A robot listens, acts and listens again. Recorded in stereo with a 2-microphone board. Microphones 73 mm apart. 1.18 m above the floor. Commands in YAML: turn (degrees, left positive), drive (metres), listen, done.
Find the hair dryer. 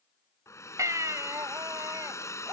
turn: 40
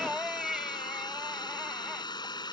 turn: 95
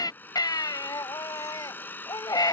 turn: 25
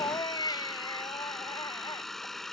done: "Facing the hair dryer."